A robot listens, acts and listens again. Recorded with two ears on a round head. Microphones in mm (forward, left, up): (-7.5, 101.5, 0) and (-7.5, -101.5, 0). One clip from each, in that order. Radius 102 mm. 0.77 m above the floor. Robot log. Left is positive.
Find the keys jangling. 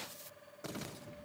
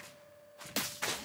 cmd idle
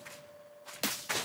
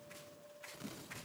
cmd idle
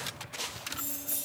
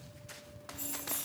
cmd yaw +90
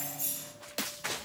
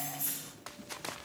note: So it is at 10° left.
cmd yaw +10
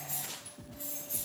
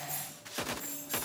note: The keys jangling is now 15° left.
cmd yaw +15
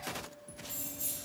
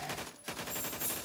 end: Facing the keys jangling, 2 to 4 m away.